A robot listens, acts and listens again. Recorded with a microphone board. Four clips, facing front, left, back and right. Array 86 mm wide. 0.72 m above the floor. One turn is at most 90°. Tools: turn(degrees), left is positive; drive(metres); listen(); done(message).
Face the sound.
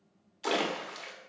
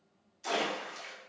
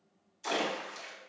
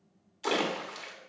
turn(degrees=-40)
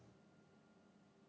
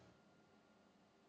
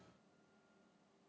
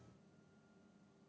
done("I heard a splash from this way, but can't make it out now.")